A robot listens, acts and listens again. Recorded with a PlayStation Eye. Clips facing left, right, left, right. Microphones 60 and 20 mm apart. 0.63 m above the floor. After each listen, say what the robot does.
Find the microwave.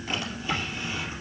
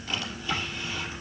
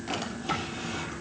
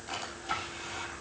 Keep listening.
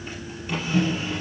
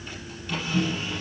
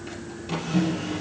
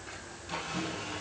Turn 65° left.
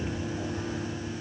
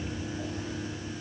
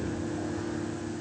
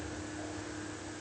Keep listening.
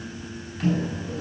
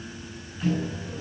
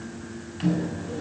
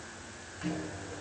Turn 45° left.
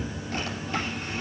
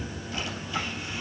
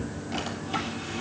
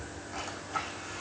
Keep listening.
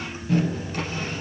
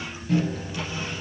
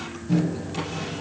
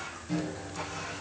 Facing the microwave.